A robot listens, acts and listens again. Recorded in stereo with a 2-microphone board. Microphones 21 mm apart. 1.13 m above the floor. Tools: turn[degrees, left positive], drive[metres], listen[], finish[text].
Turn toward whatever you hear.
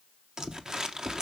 Thought: The crumpling: about 45° right or 135° right.
Action: turn[-45]
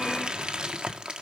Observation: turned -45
Thought: So it is at 80° right.
Action: turn[-80]
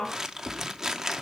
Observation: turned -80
Thought: The crumpling is now 25° right.
Action: turn[-25]
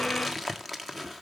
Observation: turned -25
Action: finish[Facing the crumpling.]